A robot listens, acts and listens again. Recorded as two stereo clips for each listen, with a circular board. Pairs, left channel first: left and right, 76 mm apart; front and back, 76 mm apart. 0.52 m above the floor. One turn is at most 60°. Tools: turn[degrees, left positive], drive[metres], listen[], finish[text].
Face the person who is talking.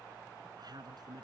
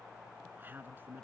Thought: The man speaking: 115° right.
Action: turn[-60]
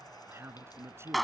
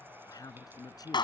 Thought: The man speaking is now 35° right.
Action: turn[-35]
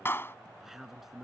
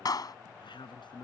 Action: finish[Found it: a man speaking, straight ahead.]